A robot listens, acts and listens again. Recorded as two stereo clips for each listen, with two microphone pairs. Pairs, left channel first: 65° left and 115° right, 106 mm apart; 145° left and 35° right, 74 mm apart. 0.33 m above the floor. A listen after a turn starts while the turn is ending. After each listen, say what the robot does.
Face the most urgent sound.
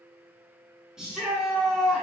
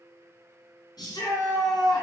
Turn 160° left.
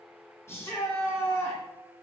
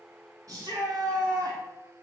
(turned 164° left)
Facing the shout, 2 to 4 m away.